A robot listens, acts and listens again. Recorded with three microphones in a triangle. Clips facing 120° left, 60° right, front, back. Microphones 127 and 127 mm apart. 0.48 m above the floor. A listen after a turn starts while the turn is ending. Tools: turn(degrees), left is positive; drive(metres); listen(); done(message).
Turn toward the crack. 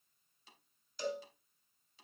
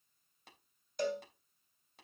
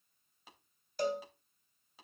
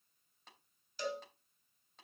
listen()
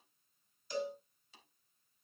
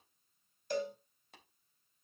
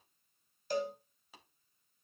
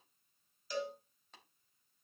listen()
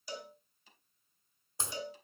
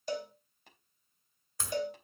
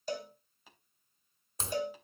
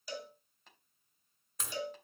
turn(degrees=55)
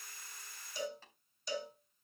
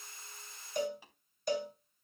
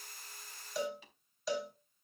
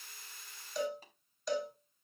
done("Facing where the crack came from. I can't hear it now.")